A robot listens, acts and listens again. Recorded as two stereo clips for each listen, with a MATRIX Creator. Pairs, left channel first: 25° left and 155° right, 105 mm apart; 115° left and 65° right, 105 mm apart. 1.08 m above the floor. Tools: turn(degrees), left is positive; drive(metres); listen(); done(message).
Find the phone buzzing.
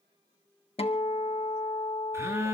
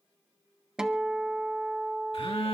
turn(degrees=140)
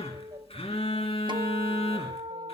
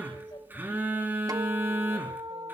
done("Facing the phone buzzing, 2 to 4 m away.")